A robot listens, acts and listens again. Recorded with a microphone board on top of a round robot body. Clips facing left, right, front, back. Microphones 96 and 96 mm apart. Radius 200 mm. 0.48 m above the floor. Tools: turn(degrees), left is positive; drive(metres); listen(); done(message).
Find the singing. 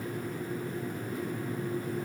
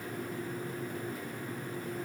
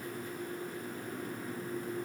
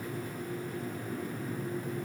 listen()
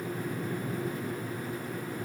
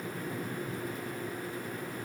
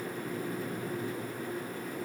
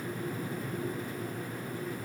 listen()
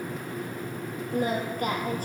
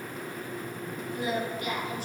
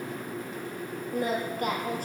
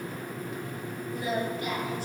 turn(degrees=45)
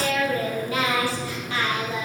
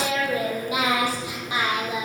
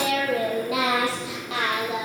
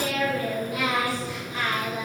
turn(degrees=-15)
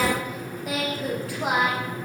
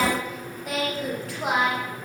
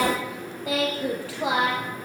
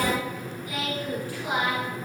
done("Facing the singing.")